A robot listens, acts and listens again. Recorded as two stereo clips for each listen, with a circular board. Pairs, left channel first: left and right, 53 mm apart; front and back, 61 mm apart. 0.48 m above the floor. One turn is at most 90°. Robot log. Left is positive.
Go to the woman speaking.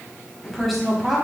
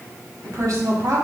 note: The woman speaking: straight behind.
cmd yaw +90
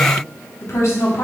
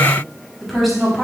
note: The woman speaking is now 90° left.
cmd yaw +90
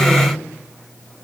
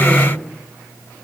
cmd fwd 1.0
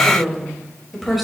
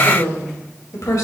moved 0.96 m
cmd fwd 1.0
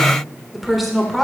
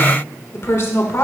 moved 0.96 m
cmd fwd 1.0
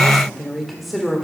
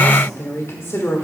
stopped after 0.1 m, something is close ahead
end: I am next to the woman speaking.